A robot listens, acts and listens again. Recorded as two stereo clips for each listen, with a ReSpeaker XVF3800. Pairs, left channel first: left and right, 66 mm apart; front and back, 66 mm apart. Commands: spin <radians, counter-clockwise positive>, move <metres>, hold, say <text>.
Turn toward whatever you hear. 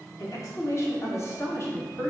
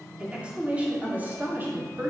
spin 2.36
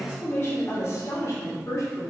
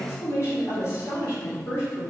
spin 0.87
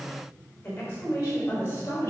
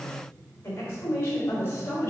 spin 0.52
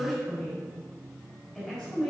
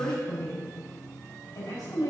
say Found it: a woman speaking, straight ahead.